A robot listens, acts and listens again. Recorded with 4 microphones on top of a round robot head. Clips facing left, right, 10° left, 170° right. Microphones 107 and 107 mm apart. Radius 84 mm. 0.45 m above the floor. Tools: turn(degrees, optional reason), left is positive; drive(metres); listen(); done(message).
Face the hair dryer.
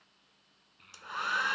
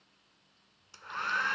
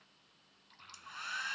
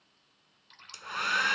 turn(degrees=170, reason="The hair dryer: 170° left.")
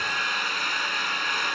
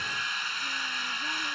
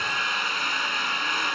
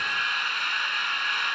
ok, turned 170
turn(degrees=60, reason="The hair dryer is now 60° left.")
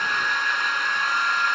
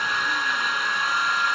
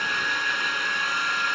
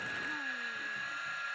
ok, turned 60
done("Facing the hair dryer.")